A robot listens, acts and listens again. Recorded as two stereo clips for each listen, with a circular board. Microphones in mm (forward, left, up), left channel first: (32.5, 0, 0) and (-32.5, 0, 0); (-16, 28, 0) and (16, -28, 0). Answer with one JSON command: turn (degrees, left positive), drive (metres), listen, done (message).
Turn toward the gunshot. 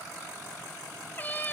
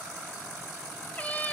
{"listen": true}
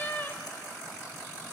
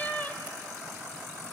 {"listen": true}
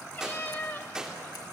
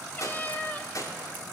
{"turn": 100}
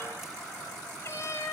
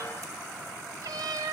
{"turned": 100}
{"done": "Facing where the gunshot came from. I can't hear it now."}